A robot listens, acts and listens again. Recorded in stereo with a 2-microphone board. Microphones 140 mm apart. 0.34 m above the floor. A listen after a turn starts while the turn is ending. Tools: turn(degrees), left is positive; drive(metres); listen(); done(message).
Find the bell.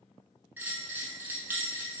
turn(degrees=-30)
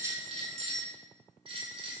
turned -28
turn(degrees=-140)
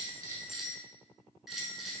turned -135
done("Found it: a bell, straight ahead.")